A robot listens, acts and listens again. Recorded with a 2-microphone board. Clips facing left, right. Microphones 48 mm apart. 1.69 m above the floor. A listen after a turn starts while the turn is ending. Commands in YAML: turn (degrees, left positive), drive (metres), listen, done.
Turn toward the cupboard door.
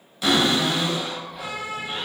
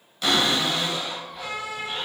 turn: 30
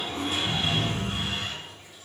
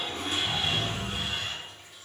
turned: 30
turn: 140
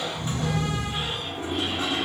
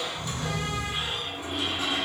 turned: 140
turn: -15
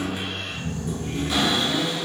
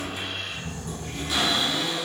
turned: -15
done: "Found it: a cupboard door, straight ahead, 1 to 2 m away."